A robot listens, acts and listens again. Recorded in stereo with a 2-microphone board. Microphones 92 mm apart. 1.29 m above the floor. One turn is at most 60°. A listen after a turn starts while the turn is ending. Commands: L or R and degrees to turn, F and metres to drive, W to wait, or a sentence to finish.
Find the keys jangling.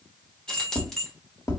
L30
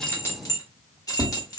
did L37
L60
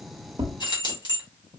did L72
L60
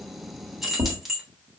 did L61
Facing the keys jangling.